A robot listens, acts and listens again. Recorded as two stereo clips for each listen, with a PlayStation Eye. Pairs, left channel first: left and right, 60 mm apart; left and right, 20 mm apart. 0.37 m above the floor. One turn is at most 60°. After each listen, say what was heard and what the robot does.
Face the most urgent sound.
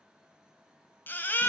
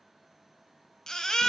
The baby crying: about 30° left or 150° left. Turn 30° left.
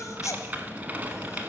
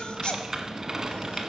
So it is at 115° left. Turn 60° left.
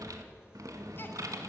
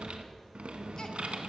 Nothing new. It was at 55° left. Turn 55° left.
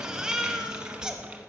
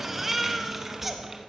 The baby crying is now 10° right. Turn 10° right.
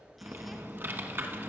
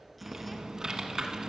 Keep listening.
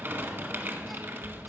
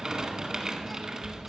Keep listening.
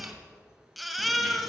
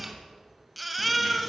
Found it: a baby crying, straight ahead.